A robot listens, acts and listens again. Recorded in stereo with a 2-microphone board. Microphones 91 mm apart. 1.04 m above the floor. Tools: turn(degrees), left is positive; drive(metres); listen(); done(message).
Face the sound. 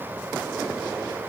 listen()
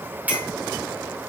turn(degrees=-15)
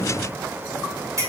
turn(degrees=-145)
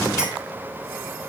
listen()
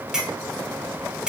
turn(degrees=-10)
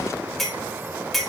done("Found it: a clink, straight ahead.")